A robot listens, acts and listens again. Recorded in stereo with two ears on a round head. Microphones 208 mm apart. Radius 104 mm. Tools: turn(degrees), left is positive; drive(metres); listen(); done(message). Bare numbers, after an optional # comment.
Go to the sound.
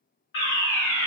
# The fire alarm: about 60° left or 120° left.
turn(60)
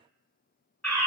drive(1.0)
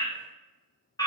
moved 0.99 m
# The fire alarm is now 20° left.
turn(20)
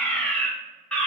drive(1.0)
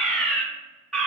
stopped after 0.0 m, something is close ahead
done("Arrived at the fire alarm, straight ahead.")